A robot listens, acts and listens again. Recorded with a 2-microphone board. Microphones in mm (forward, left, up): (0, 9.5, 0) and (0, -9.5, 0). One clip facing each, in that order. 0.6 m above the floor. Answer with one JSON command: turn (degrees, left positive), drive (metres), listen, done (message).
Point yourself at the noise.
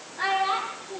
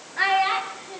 {"turn": -55}
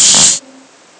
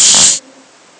{"turn": -70}
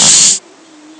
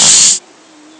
{"listen": true}
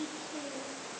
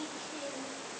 {"listen": true}
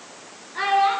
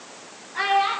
{"turn": -15}
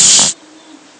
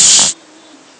{"listen": true}
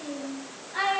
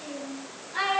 {"done": "Facing the child speaking."}